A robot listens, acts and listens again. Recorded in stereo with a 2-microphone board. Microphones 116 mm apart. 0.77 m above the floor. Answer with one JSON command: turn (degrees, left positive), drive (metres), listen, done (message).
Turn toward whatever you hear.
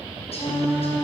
{"turn": 65}
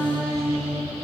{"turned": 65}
{"done": "Facing the singing, 2 to 4 m away."}